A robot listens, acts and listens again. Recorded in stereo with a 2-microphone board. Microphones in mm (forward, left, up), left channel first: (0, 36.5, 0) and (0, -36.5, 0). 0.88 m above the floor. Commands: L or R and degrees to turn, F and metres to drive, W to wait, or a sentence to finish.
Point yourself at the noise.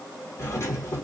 L40
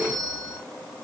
L90
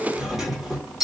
R10
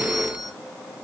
Facing the doorbell, 1 to 2 m away.